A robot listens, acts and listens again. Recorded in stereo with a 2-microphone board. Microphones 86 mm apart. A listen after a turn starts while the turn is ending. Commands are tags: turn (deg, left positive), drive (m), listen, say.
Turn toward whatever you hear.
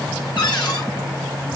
<turn deg="60"/>
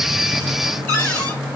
<turn deg="20"/>
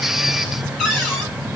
<say>Found it: a cupboard door, straight ahead.</say>